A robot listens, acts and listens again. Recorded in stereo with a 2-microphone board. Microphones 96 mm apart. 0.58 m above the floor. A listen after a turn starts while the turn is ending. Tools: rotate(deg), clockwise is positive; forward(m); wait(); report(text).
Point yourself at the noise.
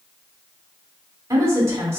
rotate(25)
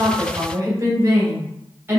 rotate(20)
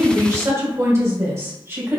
rotate(25)
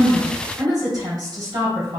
rotate(135)
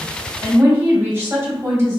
rotate(30)
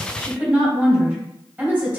rotate(15)
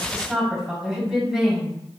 report("Found it: a woman speaking, straight ahead, 2 to 4 m away.")